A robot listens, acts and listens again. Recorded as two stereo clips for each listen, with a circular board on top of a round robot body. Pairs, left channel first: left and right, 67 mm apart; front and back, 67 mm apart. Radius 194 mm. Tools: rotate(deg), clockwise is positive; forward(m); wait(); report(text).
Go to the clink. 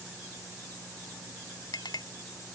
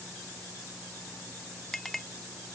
rotate(-85)
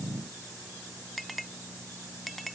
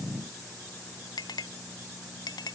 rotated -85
forward(1.0)
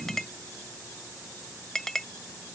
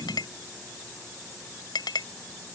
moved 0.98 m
forward(1.0)
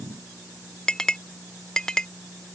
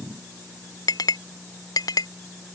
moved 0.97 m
rotate(-10)
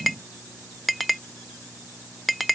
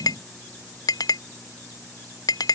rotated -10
forward(1.0)
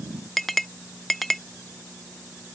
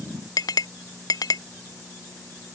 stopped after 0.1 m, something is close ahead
report("Arrived at the clink, straight ahead.")